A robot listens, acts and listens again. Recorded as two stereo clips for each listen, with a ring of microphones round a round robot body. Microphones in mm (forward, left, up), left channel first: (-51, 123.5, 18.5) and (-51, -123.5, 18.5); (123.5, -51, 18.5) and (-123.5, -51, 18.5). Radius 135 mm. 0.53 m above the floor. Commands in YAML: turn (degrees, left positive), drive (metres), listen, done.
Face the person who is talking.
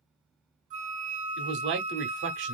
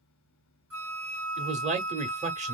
turn: -120
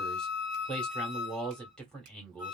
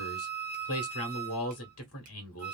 done: "Found it: a man speaking, straight ahead, 1 to 2 m away."